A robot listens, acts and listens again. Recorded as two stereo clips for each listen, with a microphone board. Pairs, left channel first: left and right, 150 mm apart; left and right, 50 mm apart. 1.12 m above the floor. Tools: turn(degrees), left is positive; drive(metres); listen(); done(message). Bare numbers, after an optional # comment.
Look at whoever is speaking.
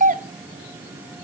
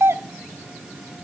listen()
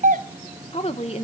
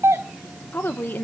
# The woman speaking: about 45° left or 135° left.
turn(45)
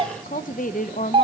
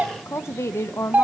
# So it is at 85° left.
turn(85)
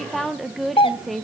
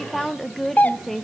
done("Facing the woman speaking, under 1 m away.")